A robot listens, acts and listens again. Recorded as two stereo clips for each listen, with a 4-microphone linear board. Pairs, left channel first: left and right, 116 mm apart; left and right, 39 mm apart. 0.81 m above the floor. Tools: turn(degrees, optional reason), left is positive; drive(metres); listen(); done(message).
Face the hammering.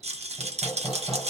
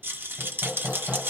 turn(degrees=30, reason="The hammering: about 30° left or 150° left.")
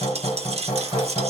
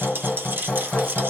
turn(degrees=120, reason="So it is at 120° left.")
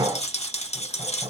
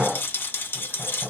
turn(degrees=-30, reason="The hammering is now 30° right.")
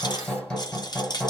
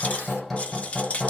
turn(degrees=10, reason="The hammering is now 10° left.")
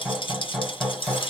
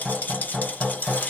done("Facing the hammering.")